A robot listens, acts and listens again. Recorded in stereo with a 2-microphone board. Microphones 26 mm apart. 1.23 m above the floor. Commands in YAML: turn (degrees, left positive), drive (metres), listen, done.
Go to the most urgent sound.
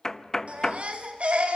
turn: -65
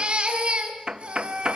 turn: -50
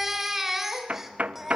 turn: -10
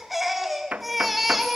drive: 1.0
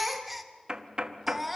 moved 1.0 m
drive: 1.0
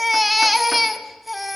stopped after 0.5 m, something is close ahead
done: "Arrived at the baby crying, straight ahead."